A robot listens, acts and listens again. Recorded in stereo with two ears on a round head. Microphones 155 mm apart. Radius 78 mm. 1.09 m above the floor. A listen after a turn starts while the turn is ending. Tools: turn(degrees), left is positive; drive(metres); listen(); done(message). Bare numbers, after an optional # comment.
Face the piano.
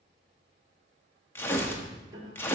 # The piano: about 25° right or 155° right.
turn(-25)
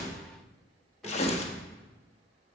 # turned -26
listen()
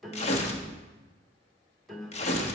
done("Found it: a piano, straight ahead.")